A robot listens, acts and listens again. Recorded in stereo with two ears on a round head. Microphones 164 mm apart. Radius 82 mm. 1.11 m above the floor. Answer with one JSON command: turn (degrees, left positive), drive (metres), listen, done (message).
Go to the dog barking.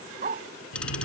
{"turn": -45}
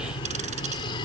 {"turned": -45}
{"listen": true}
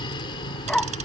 {"drive": 1.0}
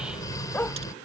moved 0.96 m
{"turn": 10}
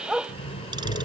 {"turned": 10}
{"drive": 1.0}
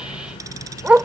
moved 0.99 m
{"turn": -10}
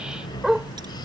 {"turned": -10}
{"drive": 1.0}
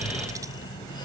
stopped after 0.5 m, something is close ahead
{"listen": true}
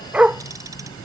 {"turn": -10}
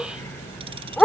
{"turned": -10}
{"done": "I am next to the dog barking."}